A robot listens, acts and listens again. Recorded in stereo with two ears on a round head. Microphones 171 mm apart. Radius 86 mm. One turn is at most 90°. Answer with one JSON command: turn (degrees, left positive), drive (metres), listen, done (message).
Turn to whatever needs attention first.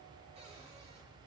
{"listen": true}
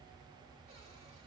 {"listen": true}
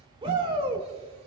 {"turn": -30}
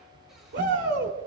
{"turn": -90}
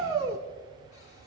{"turn": -25}
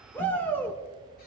{"turn": 10}
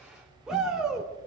{"done": "Found it: a shout, straight ahead."}